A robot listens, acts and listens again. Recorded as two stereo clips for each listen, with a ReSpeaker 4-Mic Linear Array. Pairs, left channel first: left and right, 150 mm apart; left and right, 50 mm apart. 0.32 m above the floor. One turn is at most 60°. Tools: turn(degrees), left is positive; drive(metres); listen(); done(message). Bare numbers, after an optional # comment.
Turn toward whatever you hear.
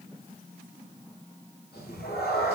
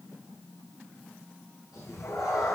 turn(60)
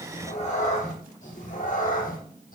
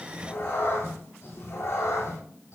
# So it is at 60° left.
turn(60)
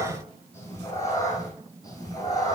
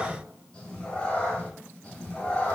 # The cat meowing is now 25° left.
turn(25)
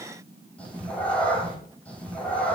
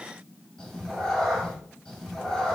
# The cat meowing is now 10° left.
turn(10)
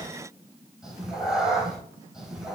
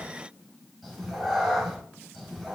done("Facing the cat meowing, 2 to 4 m away.")